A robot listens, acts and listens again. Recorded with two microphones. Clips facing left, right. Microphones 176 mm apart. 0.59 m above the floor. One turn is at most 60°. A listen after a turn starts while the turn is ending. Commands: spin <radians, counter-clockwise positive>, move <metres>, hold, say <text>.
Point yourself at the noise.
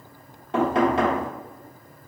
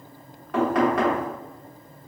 spin 0.44
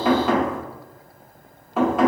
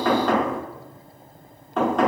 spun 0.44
say Found it: knocking, straight ahead, 1 to 2 m away.